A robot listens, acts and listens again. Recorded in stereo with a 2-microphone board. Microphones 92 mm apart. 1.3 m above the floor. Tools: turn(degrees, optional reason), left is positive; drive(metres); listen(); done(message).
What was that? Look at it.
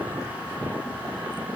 listen()
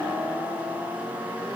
listen()
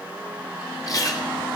turn(degrees=40, reason="The chewing: about 40° left or 140° left.")
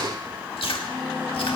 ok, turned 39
turn(degrees=100, reason="So it is at 100° left.")
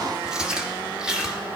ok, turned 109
turn(degrees=-10, reason="The chewing is now 10° right.")
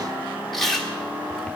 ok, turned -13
done("Facing the chewing.")